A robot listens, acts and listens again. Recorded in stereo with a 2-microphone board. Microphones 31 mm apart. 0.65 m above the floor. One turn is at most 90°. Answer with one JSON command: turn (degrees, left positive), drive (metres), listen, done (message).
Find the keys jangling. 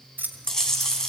{"turn": -70}
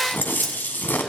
{"listen": true}
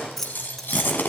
{"turn": 15}
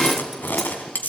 {"listen": true}
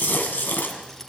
{"listen": true}
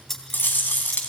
{"turn": 10}
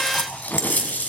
{"listen": true}
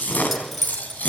{"done": "Found it: keys jangling, straight ahead."}